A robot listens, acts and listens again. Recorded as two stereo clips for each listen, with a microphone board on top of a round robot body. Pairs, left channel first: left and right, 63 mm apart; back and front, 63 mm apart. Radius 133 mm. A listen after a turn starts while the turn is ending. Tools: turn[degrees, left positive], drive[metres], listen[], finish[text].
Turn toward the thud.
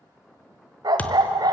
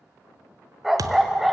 Thought: The thud: 20° left.
Action: turn[20]
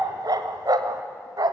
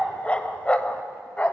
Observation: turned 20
Action: finish[Facing where the thud came from. I can't hear it now.]